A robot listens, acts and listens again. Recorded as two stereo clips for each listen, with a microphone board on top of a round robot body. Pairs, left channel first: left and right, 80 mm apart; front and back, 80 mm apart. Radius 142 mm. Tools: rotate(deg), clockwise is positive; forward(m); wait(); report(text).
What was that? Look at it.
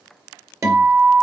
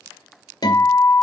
rotate(35)
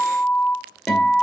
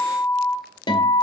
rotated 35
report("Facing the guitar, 2 to 4 m away.")